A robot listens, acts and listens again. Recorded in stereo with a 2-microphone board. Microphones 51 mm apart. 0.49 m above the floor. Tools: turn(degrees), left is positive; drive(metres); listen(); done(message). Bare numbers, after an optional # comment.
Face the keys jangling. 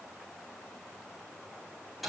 listen()
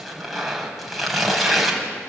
listen()
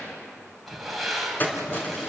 # The keys jangling: about 35° left or 145° left.
turn(35)
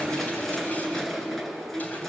done("Found it: keys jangling, straight ahead, over 4 m away.")